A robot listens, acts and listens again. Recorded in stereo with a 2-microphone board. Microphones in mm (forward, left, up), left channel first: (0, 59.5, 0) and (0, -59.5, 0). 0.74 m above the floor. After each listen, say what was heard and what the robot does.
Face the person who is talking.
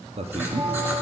The man speaking: about 60° right or 120° right. Turn 60° right.
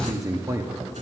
So it is at 30° right. Turn 30° right.
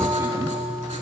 Keep listening.
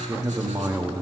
The man speaking is now 30° right. Turn 30° right.
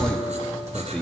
Facing the man speaking, under 1 m away.